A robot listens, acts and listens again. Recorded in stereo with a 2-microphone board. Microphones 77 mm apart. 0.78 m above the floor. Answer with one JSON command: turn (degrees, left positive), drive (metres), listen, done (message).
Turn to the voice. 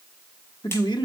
{"turn": 75}
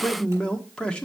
{"turn": 15}
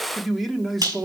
{"done": "Found it: a man speaking, straight ahead, 1 to 2 m away."}